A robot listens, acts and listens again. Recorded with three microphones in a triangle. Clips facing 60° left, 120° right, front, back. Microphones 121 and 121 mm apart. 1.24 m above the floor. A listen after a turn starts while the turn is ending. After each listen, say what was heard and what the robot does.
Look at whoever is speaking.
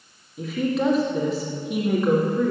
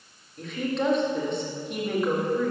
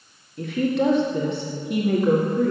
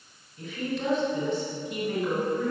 The woman speaking: 25° right. Turn 25° right.
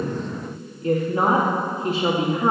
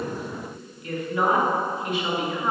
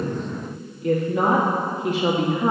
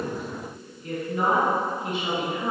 Found it: a woman speaking, straight ahead, 1 to 2 m away.